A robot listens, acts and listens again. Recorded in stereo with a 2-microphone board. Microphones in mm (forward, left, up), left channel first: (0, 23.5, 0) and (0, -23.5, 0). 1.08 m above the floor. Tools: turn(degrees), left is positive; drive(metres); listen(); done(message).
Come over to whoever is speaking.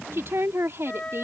turn(degrees=-55)
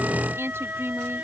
turn(degrees=-65)
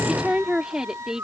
turn(degrees=-15)
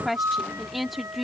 drive(metres=1.0)
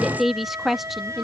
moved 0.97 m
drive(metres=1.0)
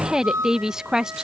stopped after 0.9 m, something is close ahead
turn(degrees=-15)
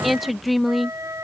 done("I am next to the woman speaking.")